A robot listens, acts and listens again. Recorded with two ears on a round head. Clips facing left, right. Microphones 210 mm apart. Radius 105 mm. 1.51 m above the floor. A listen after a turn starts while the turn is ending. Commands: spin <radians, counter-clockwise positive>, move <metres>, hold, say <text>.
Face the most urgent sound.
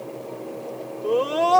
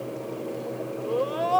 spin 1.13
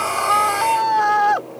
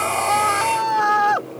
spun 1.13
say Facing the scream.